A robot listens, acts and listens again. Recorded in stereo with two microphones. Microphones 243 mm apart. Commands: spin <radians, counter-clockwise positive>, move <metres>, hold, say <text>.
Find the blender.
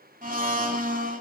spin -0.61
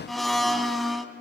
say Found it: a blender, straight ahead, under 1 m away.